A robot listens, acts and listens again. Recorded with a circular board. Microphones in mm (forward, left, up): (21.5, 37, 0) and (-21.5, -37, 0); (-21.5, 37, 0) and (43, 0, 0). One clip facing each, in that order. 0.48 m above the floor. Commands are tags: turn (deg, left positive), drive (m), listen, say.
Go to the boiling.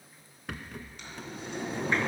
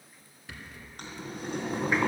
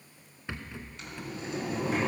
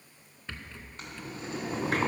<turn deg="-80"/>
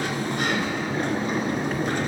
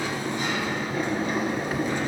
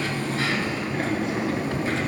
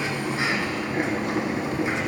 <drive m="1.0"/>
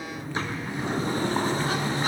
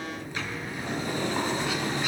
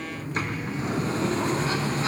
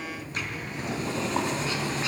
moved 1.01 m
<listen/>
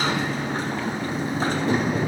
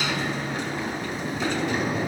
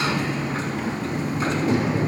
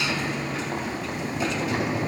<listen/>
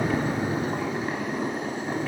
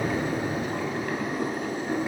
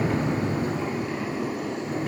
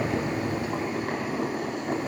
<drive m="1.0"/>
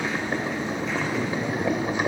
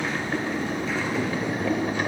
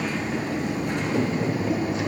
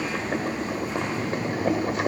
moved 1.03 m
<turn deg="-10"/>
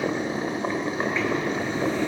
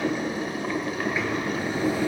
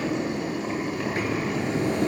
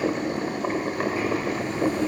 <drive m="1.0"/>
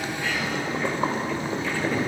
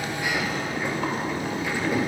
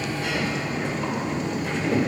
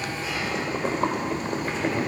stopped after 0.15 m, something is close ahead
<say>Arrived at the boiling, straight ahead.</say>